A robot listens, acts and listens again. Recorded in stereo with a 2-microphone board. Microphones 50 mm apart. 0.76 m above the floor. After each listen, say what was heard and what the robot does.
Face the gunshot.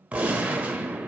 The gunshot: about 30° right or 150° right. Turn 30° right.
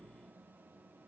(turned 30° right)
Keep listening.
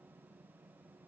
I heard a gunshot, but can't make it out now. It was about straight ahead or 120° right.